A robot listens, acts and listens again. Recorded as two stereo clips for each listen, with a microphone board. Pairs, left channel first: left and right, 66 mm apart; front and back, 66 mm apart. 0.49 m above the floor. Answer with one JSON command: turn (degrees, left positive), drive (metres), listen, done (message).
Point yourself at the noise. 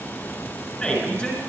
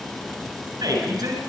{"turn": 160}
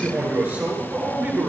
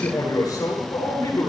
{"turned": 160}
{"turn": -35}
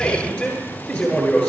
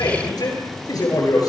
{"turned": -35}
{"turn": 10}
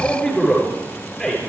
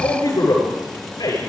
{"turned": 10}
{"done": "Found it: a man speaking, straight ahead, over 4 m away."}